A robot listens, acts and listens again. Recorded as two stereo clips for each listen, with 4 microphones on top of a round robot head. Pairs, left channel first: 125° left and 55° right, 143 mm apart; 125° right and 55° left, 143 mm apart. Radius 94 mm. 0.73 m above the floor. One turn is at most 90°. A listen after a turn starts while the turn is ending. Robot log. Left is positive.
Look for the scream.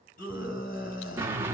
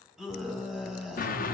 note: The scream: 145° left.
cmd yaw +90
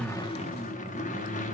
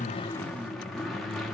note: Nothing new. It was at 55° left.
cmd yaw +55
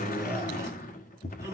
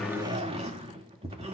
cmd idle
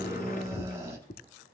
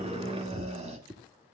note: The scream is now 15° left.
cmd yaw +15
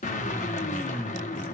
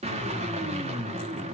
cmd idle
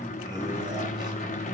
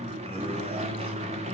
cmd idle
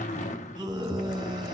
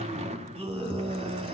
note: The scream is now 10° left.
cmd yaw +10
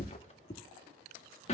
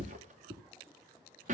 cmd idle
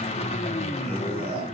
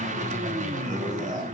cmd idle
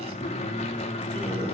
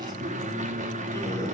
end: I heard a scream from this way, but can't make it out now.